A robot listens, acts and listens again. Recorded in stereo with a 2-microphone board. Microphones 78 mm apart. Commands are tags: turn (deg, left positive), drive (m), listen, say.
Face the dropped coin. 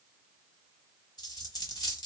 <turn deg="55"/>
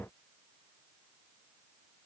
<listen/>
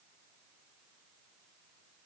<say>I heard a dropped coin, but can't make it out now. It was about straight ahead or 70° left.</say>